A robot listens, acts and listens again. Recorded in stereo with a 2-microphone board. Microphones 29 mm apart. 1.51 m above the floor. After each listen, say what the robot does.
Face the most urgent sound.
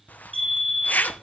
Turn 30° right.
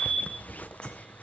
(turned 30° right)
Turn 25° left.
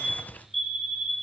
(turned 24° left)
Facing the fire alarm, 2 to 4 m away.